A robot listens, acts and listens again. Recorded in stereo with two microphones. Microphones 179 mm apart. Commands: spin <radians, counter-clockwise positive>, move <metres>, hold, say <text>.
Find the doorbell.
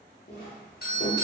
spin 0.96
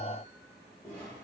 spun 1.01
hold
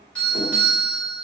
spin 0.17
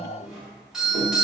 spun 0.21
say Facing the doorbell, 1 to 2 m away.